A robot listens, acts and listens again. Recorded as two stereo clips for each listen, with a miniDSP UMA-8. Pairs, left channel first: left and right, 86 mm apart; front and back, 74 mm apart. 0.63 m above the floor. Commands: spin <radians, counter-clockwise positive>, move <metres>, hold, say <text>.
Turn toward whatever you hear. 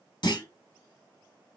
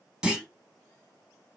spin 1.83
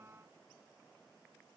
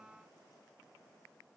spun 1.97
spin -0.17
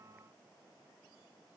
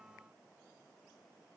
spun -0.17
say I heard a clunk from this way, but can't make it out now.